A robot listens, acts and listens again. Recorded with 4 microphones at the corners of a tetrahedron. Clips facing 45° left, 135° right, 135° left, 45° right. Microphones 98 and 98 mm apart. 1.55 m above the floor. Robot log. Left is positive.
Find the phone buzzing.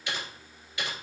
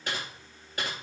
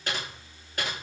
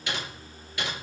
cmd idle
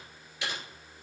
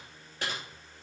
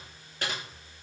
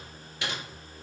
cmd idle
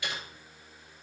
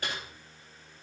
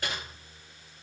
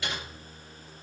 end: I can't make out a phone buzzing, only typing on a keyboard.